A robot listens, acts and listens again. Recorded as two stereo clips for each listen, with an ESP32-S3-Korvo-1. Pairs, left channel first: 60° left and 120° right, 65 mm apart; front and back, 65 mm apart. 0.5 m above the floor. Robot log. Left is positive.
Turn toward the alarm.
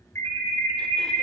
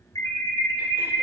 note: The alarm: 15° left.
cmd yaw +15
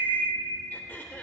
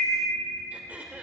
end: Found it: an alarm, straight ahead, 1 to 2 m away.